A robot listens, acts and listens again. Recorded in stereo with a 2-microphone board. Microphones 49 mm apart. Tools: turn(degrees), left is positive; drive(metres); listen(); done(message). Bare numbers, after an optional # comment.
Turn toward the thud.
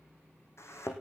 # The thud: about 70° left or 110° left.
turn(70)
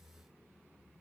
listen()
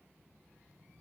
done("I heard a thud, but can't make it out now. It was about straight ahead or 40° left.")